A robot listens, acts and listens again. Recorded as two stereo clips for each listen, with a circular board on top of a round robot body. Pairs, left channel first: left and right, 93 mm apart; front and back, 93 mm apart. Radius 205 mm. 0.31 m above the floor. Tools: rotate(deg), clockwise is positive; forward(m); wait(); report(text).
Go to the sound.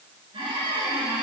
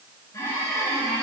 rotate(60)
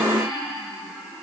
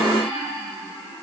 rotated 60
forward(1.0)
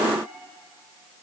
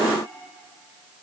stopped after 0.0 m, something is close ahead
wait()
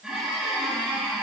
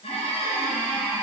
rotate(10)
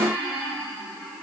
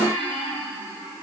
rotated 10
report("Blocked. The squeak is further on, straight ahead.")